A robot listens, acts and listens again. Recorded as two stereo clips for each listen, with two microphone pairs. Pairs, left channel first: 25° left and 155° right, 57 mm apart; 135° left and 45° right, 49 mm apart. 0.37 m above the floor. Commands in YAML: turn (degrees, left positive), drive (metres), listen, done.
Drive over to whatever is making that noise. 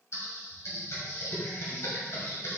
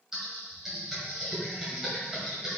turn: 35
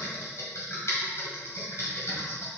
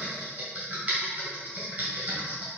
drive: 1.0
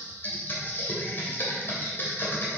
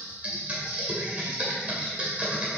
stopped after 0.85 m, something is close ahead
done: "Arrived at the typing on a keyboard, straight ahead."